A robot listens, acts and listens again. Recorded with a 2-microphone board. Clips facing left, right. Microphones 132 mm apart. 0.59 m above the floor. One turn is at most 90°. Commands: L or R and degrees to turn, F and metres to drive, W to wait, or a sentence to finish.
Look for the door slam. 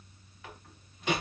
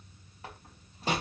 R40
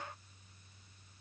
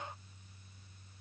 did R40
W
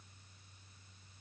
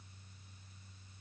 I heard a door slam, but can't make it out now. It was about straight ahead or 100° right.